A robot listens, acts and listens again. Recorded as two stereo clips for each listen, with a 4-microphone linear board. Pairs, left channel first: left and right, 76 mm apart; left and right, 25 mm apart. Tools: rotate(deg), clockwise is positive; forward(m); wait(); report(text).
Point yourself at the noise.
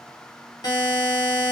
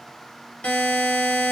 rotate(-55)
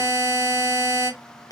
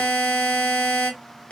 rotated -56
rotate(-60)
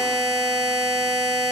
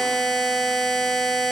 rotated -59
report("Found it: a buzzer, straight ahead.")